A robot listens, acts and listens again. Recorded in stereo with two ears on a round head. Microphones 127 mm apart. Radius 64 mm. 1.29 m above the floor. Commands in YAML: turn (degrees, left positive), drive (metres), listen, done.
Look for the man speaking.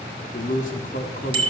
turn: 65
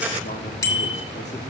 listen: true
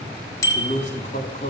turn: 50
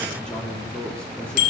done: "Facing the man speaking."